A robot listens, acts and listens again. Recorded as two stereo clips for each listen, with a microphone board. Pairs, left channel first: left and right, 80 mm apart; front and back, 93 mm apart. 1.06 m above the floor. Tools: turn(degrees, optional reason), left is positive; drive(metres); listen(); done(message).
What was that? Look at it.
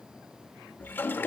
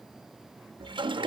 turn(degrees=155, reason="The toilet flushing: 155° left.")
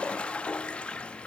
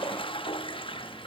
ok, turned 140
turn(degrees=15, reason="The toilet flushing is now 15° left.")
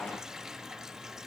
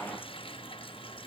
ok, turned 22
done("Found it: a toilet flushing, straight ahead, under 1 m away.")